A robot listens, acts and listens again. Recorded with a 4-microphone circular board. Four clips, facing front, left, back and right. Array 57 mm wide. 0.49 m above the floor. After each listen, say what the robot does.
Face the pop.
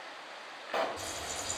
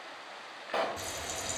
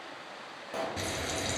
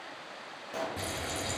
Turn 50° left.
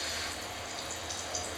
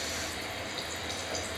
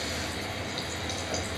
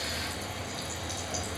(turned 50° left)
Facing where the pop came from. I can't hear it now.